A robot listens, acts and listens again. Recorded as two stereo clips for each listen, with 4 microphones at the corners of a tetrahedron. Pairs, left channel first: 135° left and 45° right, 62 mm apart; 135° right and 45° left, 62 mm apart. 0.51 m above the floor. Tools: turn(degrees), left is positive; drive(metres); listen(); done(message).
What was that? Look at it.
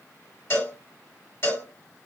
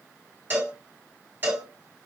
turn(degrees=100)
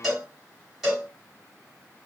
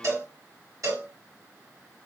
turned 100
turn(degrees=40)
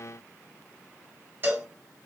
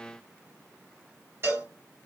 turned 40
done("Facing the cowbell.")